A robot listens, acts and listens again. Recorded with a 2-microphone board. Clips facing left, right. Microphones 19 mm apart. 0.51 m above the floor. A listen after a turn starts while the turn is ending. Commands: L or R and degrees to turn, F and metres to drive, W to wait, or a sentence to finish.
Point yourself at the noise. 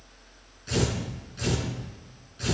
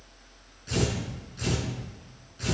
L30
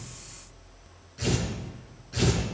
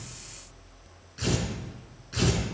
R15
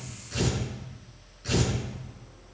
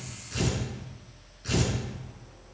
Facing the tearing paper, over 4 m away.